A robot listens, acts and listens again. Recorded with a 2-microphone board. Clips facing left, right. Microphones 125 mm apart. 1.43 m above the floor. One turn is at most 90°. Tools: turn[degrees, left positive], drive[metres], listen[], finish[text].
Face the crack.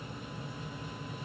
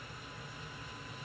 Action: listen[]
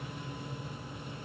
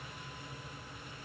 Action: listen[]
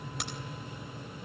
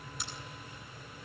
Thought: The crack: about 70° left or 110° left.
Action: turn[70]
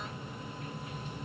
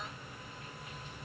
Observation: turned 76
Action: listen[]
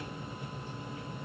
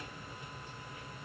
Action: finish[I heard a crack, but can't make it out now. It was about 5° right or 30° left.]